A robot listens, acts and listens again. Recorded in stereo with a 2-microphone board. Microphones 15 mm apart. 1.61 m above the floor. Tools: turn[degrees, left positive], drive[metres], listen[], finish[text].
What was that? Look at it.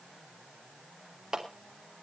Thought: The clap: about 45° right or 135° right.
Action: turn[-45]
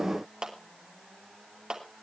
Thought: So it is at 80° right.
Action: turn[-80]
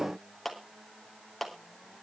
Action: finish[Found it: a clap, straight ahead.]